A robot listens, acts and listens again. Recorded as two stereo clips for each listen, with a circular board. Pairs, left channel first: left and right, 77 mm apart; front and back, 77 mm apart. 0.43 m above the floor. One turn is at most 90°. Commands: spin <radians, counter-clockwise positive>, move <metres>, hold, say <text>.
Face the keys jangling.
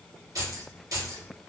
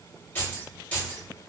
spin -1.13
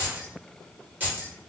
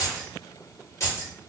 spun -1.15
spin -0.61
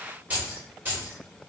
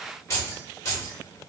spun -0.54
spin -0.70
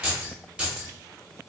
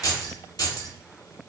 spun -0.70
spin -0.26
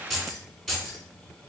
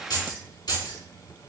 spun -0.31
say Facing the keys jangling, 1 to 2 m away.